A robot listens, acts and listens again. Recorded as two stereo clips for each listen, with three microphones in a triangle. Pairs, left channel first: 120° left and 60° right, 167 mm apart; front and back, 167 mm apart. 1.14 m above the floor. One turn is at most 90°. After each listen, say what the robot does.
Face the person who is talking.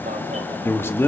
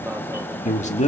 Turn 45° left.
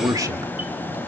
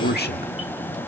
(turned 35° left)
Turn 10° left.
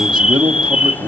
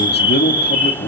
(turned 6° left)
Found it: a man speaking, straight ahead, 1 to 2 m away.